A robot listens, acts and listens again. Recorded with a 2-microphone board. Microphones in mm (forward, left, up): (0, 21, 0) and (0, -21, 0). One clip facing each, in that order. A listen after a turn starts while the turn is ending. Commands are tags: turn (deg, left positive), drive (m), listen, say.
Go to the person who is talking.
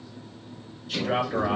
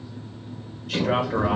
<turn deg="-70"/>
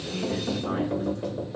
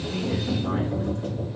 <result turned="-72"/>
<listen/>
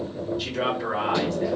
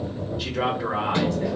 <turn deg="-15"/>
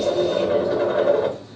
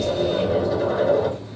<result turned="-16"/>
<listen/>
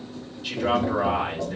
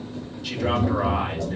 <drive m="1.0"/>
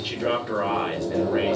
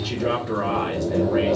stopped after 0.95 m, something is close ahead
<say>I am next to the man speaking.</say>